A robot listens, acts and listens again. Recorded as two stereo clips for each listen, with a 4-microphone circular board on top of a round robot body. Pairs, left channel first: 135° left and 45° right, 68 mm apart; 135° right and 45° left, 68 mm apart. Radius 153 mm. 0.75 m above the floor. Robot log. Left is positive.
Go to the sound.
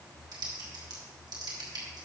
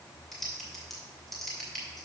note: The typing on a keyboard: 50° right.
cmd yaw -50
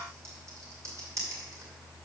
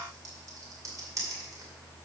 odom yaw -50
cmd fwd 1.0
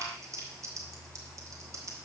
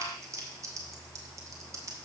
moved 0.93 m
cmd fwd 1.0
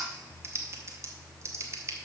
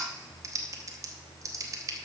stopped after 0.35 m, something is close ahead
end: I am next to the typing on a keyboard.